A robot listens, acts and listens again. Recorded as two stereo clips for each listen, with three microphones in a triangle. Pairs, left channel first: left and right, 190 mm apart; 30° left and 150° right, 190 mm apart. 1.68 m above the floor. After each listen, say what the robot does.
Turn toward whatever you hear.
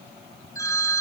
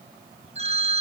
Turn 160° left.
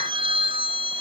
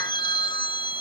Turn 30° right.
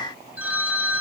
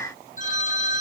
Turn 10° right.
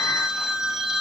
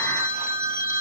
Found it: a phone ringing, straight ahead.